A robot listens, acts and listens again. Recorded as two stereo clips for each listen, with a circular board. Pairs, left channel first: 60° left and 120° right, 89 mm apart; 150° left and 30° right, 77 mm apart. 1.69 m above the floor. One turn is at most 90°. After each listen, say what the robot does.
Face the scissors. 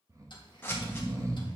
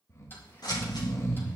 Turn 90° left.
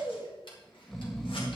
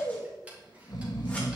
Turn 35° left.
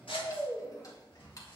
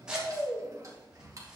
Turn 50° left.
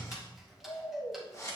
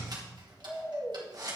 Found it: scissors, straight ahead, 2 to 4 m away.